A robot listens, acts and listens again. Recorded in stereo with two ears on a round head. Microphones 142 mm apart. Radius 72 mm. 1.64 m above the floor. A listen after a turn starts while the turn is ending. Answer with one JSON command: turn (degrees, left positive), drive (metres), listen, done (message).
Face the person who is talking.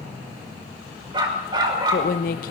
{"turn": 65}
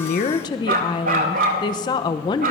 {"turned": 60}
{"turn": 30}
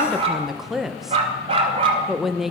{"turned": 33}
{"done": "Facing the woman speaking."}